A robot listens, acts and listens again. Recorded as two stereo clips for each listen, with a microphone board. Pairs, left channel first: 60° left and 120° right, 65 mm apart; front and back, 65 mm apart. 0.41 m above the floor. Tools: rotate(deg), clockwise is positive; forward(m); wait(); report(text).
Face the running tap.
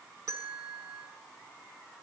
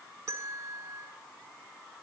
wait()
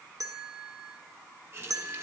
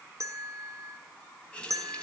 rotate(70)
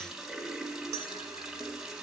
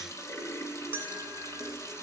rotate(35)
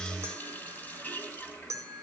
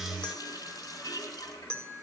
report("Facing the running tap.")